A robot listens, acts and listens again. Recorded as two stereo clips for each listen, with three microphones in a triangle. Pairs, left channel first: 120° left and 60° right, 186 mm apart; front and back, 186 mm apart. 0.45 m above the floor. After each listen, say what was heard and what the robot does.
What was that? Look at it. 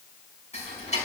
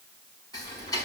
The ticking: 70° left. Turn 70° left.
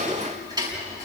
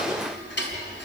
The ticking is now 10° left. Turn 10° left.
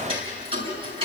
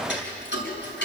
Facing the ticking, over 4 m away.